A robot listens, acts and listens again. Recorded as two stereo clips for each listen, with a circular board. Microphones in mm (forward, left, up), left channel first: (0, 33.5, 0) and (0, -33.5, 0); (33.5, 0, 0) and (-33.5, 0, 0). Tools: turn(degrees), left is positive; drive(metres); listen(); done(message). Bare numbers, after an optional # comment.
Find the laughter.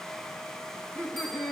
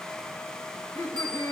# The laughter: 25° left.
turn(25)
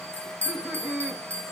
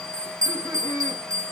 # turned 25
done("Found it: laughter, straight ahead.")